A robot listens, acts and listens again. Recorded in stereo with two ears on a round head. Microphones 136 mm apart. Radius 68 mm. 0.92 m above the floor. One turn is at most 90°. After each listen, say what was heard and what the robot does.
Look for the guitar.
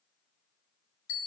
Keep listening.
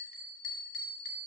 Keep listening.
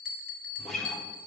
Turn 30° left.
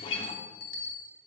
So it is at 145° left. Turn 90° left.
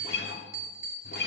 The guitar is now 80° left. Turn 80° left.
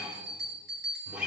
Found it: a guitar, straight ahead, under 1 m away.